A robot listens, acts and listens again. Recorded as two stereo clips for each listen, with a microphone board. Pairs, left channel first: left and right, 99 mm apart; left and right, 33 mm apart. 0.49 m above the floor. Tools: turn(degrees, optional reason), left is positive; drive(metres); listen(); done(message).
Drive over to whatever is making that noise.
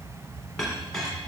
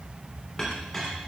turn(degrees=30)
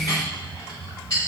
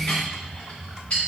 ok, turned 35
turn(degrees=140, reason="So it is at 140° left.")
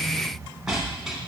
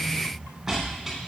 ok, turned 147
drive(metres=1.0)
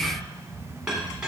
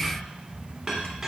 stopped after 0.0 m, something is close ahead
turn(degrees=-10, reason="The clink is now 10° right.")
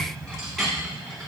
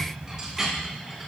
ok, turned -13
done("Something is in my way. I am facing the clink but have not reached it.")